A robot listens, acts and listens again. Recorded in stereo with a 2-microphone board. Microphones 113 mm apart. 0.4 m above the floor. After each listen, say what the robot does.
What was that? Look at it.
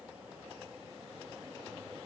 Keep listening.
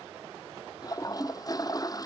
Turn 35° left.
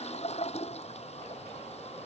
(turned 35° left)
Turn 110° left.
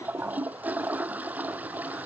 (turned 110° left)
Turn 15° right.
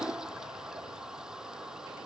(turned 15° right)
Found it: a toilet flushing, straight ahead.